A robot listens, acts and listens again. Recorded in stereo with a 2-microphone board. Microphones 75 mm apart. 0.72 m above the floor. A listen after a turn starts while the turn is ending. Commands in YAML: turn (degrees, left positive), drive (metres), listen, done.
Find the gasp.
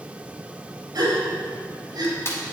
turn: -70
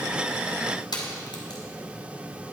listen: true
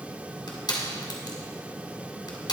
done: "I heard a gasp, but can't make it out now. It was about straight ahead or 40° right."